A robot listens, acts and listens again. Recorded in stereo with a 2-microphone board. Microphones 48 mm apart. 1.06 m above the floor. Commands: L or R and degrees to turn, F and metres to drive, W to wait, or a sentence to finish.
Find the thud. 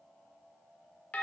W
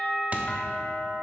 R35
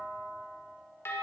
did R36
W
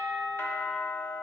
I heard a thud, but can't make it out now. It was about 5° left or 110° right.